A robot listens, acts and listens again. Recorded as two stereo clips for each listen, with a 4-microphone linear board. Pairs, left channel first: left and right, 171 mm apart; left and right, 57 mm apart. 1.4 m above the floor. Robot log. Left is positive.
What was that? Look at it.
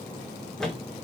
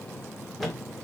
cmd yaw +30
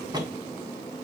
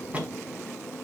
note: So it is at 25° right.
cmd yaw -25
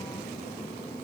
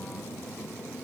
end: I heard a thud from this way, but can't make it out now.